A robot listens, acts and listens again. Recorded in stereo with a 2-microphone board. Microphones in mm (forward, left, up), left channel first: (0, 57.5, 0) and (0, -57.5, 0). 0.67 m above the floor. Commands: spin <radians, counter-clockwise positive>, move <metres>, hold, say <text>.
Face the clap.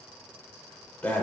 hold
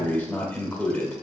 hold
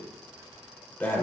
say I can't make out a clap, only breathing.